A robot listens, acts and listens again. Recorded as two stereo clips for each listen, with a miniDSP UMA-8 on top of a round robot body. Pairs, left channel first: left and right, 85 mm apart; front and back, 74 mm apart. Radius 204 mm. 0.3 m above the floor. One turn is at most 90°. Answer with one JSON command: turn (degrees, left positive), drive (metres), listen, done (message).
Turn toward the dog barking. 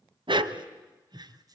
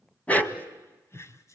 {"turn": -65}
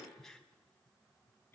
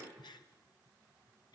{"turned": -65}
{"listen": true}
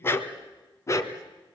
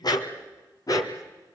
{"turn": 40}
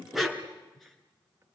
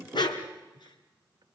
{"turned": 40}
{"done": "Facing the dog barking, 2 to 4 m away."}